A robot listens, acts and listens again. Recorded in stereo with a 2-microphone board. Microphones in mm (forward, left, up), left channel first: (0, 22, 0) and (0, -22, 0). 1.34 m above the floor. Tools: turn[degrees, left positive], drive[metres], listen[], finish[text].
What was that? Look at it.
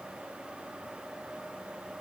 Action: listen[]
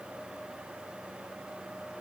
Action: listen[]
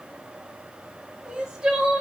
Thought: The crying: about 15° right or 165° right.
Action: turn[-15]
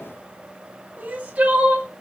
Thought: So it is at 150° right.
Action: turn[-150]
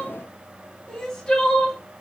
Thought: The crying is now 15° left.
Action: turn[15]
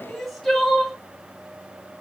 Action: finish[Facing the crying.]